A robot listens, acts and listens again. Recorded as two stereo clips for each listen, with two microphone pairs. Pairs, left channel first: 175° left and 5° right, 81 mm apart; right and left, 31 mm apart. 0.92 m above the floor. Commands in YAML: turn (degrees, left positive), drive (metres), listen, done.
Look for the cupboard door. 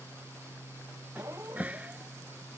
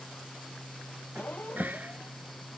turn: 70
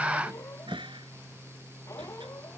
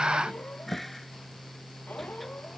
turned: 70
done: "Facing the cupboard door."